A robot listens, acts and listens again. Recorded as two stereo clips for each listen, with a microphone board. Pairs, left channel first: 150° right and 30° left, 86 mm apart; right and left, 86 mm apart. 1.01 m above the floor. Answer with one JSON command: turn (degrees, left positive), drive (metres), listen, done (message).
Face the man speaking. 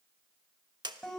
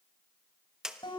{"listen": true}
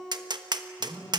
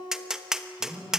{"turn": 55}
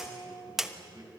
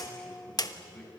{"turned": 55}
{"turn": -10}
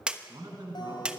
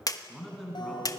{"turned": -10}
{"done": "Facing the man speaking, over 4 m away."}